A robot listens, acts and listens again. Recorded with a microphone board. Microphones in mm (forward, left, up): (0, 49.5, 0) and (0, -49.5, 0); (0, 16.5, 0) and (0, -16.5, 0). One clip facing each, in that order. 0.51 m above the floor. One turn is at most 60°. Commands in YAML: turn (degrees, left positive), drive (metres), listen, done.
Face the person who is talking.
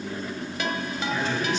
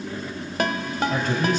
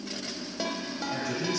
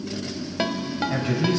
turn: -50
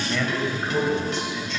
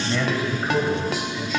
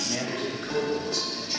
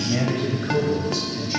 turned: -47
done: "Found it: a man speaking, straight ahead."